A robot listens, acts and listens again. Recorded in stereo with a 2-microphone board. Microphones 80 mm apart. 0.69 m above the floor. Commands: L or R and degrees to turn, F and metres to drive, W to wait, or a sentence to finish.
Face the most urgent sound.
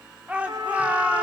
R15
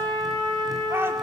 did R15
R150
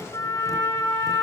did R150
W
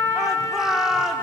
Found it: a shout, straight ahead, 1 to 2 m away.